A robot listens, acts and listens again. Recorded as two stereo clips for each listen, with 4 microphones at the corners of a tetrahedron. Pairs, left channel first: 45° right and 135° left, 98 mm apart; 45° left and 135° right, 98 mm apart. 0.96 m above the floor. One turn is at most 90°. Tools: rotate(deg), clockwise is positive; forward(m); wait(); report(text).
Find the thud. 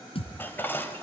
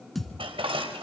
rotate(45)
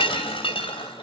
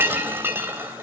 report("I heard a thud from this way, but can't make it out now.")